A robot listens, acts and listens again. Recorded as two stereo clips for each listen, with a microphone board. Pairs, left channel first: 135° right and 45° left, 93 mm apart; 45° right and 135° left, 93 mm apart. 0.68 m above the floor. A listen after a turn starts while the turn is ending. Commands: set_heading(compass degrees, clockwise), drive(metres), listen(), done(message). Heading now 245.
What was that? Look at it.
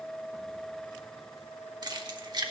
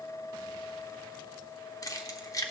done("Found it: keys jangling, straight ahead, under 1 m away.")